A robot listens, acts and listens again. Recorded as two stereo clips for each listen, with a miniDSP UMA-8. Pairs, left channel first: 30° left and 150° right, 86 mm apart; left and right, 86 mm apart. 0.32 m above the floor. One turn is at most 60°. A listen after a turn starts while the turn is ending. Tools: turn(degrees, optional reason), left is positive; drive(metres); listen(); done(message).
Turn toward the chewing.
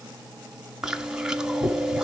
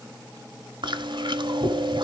turn(degrees=-60, reason="The chewing: 70° right.")
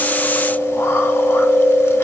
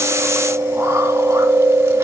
turn(degrees=-35, reason="The chewing is now 35° right.")
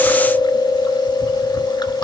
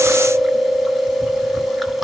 done("Found it: chewing, straight ahead.")